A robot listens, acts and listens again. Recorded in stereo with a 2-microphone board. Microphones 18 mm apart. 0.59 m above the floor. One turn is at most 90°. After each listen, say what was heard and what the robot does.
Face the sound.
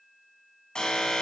The alarm: about 45° left or 135° left. Turn 45° left.
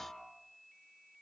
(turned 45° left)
Keep listening.
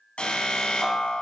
So it is at 90° left. Turn 90° left.
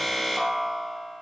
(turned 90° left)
Facing the alarm.